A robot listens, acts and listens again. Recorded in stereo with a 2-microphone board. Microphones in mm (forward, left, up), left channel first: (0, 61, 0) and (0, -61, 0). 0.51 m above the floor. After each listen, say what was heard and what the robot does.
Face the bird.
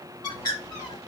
The bird: about 35° left or 145° left. Turn 35° left.
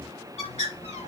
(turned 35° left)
So it is at 110° left. Turn 110° left.
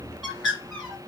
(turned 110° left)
Facing the bird.